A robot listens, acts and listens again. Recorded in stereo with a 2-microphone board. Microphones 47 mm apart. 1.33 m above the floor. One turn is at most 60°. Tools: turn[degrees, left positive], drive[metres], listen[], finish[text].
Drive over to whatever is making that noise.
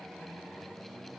Action: listen[]
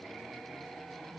Action: listen[]
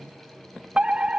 Thought: The fire alarm: about 25° right or 155° right.
Action: turn[-25]
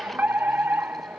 Thought: So it is at 135° right.
Action: turn[-60]
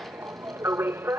Thought: The fire alarm is now 70° right.
Action: turn[-60]
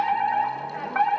Thought: The fire alarm is now 10° left.
Action: turn[10]
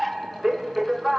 Action: drive[1.0]
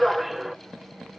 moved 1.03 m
Action: drive[1.0]
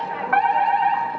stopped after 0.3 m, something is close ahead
Action: finish[Arrived at the fire alarm, straight ahead.]